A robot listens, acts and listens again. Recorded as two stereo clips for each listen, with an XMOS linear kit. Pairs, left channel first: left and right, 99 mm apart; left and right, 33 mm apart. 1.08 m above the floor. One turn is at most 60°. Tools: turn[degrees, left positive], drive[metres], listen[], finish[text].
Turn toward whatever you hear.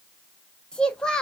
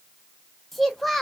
Action: turn[30]
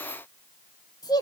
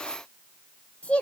Thought: So it is at 140° left.
Action: turn[60]
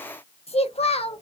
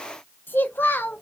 Thought: The child speaking is now 100° left.
Action: turn[60]
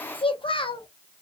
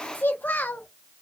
Thought: The child speaking is now 55° left.
Action: turn[55]
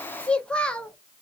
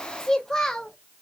Thought: The child speaking is now 10° left.
Action: turn[10]
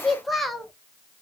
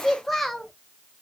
Action: finish[Facing the child speaking, under 1 m away.]